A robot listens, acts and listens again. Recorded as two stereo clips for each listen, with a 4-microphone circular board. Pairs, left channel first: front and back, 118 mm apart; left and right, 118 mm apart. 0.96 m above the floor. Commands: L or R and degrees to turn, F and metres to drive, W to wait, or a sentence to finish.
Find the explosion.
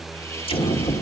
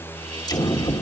L35
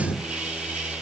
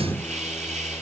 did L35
Found it: an explosion, straight ahead, 1 to 2 m away.